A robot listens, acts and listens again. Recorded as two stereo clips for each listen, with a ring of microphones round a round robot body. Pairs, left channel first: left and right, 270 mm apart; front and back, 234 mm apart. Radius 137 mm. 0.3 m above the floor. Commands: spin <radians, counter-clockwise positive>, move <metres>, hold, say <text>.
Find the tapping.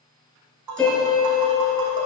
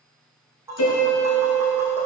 spin -1.75
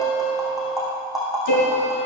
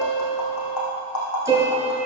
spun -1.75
say Found it: tapping, straight ahead.